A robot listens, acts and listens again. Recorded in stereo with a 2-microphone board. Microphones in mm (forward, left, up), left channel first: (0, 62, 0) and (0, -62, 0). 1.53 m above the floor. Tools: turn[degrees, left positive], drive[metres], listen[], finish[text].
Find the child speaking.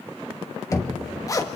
Action: listen[]
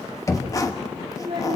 Thought: The child speaking: about 40° right or 140° right.
Action: turn[-40]
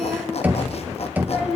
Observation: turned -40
Thought: So it is at 10° right.
Action: turn[-10]
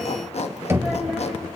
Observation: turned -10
Action: listen[]
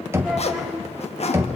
Action: listen[]
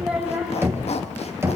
Action: finish[Found it: a child speaking, straight ahead, over 4 m away.]